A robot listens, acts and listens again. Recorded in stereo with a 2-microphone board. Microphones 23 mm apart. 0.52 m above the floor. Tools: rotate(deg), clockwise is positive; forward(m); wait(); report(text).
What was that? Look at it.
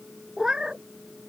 rotate(40)
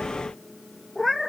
report("Facing the cat meowing.")